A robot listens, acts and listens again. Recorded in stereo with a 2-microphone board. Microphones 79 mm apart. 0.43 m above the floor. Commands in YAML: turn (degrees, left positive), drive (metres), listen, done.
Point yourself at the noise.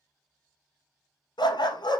turn: 70
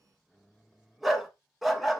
done: "Found it: a dog barking, straight ahead, under 1 m away."